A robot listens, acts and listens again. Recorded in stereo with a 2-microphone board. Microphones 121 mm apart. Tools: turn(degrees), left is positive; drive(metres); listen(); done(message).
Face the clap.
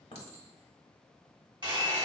listen()
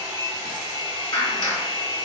turn(degrees=35)
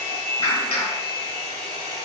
turn(degrees=100)
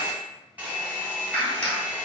turn(degrees=15)
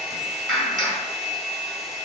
done("Facing the clap, 1 to 2 m away.")